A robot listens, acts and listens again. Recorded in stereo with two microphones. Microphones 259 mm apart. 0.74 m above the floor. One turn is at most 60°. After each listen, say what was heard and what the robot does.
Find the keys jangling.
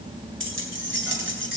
The keys jangling: about 45° right or 135° right. Turn 45° right.
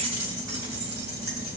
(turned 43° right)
So it is at 95° right. Turn 60° right.
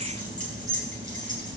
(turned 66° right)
The keys jangling is now 30° right. Turn 30° right.
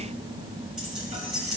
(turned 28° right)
Found it: keys jangling, straight ahead.